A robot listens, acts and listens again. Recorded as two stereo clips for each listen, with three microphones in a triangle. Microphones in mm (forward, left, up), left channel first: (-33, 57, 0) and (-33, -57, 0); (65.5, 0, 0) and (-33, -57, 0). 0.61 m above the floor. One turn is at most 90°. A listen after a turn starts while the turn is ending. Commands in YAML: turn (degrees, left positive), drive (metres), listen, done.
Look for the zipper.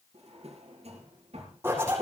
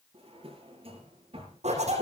turn: -90
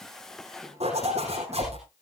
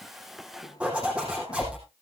turn: -70
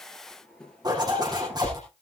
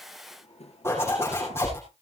turn: -40
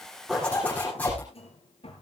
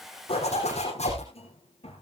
turn: 15
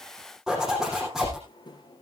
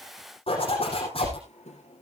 done: "Found it: a zipper, straight ahead."